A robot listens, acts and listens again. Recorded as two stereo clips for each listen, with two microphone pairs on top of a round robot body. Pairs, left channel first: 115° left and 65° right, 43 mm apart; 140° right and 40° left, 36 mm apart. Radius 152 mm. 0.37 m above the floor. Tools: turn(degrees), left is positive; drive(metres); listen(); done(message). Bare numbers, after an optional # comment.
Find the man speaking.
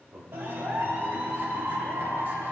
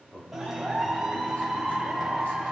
# The man speaking: 105° right.
turn(-105)
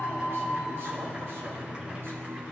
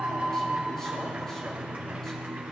listen()
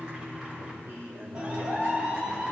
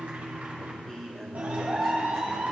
# The man speaking is now 60° right.
turn(-60)
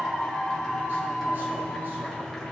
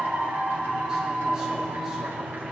listen()
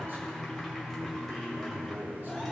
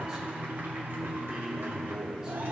# The man speaking is now 30° right.
turn(-30)
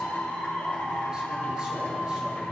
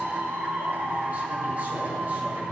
listen()
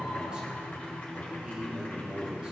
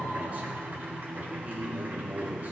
done("Facing the man speaking, 2 to 4 m away.")